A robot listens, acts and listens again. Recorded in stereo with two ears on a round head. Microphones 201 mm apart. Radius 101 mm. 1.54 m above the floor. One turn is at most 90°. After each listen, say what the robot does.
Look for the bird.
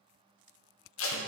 Keep listening.
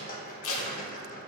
Keep listening.
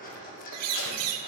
Turn 90° right.
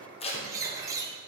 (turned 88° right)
Turn 15° right.
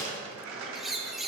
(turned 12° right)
Facing the bird, under 1 m away.